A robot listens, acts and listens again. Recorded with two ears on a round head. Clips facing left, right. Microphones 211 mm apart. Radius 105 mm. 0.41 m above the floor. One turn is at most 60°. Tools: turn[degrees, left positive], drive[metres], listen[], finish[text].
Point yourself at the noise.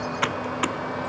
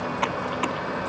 Thought: The typing on a keyboard: about 20° left or 160° left.
Action: turn[20]
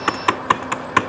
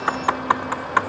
Thought: So it is at 135° left.
Action: turn[60]
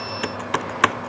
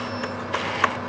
Thought: The typing on a keyboard is now 55° left.
Action: turn[55]
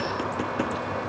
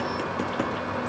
Action: listen[]
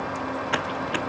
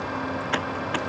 Action: finish[Facing the typing on a keyboard.]